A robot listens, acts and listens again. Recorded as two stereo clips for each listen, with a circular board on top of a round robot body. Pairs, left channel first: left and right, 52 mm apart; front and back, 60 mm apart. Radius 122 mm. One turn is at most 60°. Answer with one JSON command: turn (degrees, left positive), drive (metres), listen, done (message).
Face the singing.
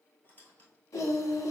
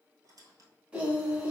{"turn": 60}
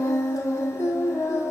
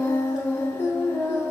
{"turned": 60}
{"turn": 60}
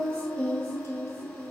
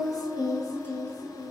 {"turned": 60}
{"turn": 15}
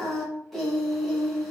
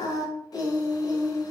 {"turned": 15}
{"done": "Facing the singing."}